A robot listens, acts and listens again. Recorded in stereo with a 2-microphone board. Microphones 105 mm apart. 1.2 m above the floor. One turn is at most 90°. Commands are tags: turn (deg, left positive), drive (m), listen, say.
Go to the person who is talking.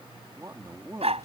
<turn deg="-40"/>
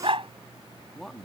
<drive m="1.0"/>
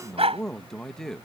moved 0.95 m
<drive m="1.0"/>
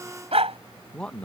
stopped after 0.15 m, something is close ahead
<turn deg="10"/>
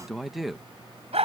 <say>I am next to the man speaking.</say>